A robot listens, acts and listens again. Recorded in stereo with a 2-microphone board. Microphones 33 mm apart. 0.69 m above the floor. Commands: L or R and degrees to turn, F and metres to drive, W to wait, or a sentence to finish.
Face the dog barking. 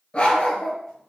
L30
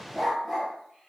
Facing the dog barking.